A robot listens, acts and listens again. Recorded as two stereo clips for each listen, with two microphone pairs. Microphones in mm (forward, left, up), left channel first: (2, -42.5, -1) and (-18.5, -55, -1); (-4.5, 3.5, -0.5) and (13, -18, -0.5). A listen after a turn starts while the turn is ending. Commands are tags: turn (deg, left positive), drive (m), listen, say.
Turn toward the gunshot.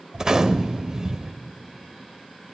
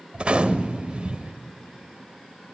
<turn deg="-90"/>
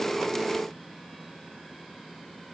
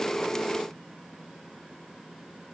<say>I heard a gunshot from this way, but can't make it out now.</say>